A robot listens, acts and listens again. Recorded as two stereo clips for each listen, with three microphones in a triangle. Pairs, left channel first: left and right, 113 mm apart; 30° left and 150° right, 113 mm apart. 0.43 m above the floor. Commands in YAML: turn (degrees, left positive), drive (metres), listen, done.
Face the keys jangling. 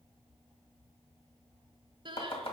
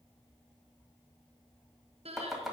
listen: true
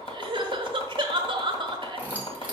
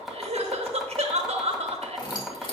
turn: -15
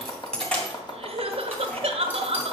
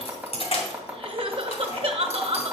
turn: 10
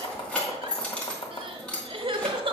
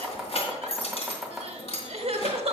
turn: 10
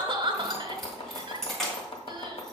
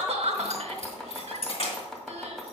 done: "Facing the keys jangling, 2 to 4 m away."